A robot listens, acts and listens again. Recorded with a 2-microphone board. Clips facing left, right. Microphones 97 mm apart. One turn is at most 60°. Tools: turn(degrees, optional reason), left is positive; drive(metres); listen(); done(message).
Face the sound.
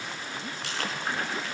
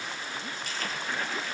turn(degrees=60)
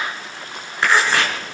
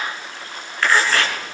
turn(degrees=20, reason="So it is at 20° left.")
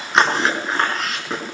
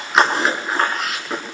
done("Facing the chewing.")